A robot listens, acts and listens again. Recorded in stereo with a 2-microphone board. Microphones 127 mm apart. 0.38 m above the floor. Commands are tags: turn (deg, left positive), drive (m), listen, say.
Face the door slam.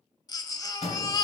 <turn deg="55"/>
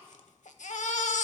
<listen/>
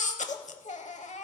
<say>I heard a door slam, but can't make it out now. It was about straight ahead or 70° left.</say>